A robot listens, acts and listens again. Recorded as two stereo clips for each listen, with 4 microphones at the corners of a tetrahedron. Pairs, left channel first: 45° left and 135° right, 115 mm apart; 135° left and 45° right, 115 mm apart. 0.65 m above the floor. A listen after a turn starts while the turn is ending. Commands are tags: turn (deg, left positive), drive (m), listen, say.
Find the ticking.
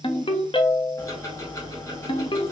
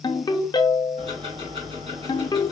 <turn deg="-15"/>
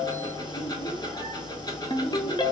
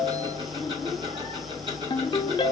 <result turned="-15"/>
<turn deg="-10"/>
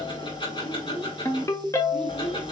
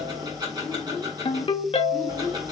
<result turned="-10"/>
<say>Found it: ticking, straight ahead.</say>